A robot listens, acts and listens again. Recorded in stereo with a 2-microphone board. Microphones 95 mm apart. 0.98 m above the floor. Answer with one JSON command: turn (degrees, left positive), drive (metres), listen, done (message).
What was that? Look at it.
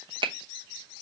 {"turn": -60}
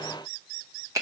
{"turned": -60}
{"turn": -40}
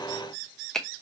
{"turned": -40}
{"done": "Facing the finger snap, under 1 m away."}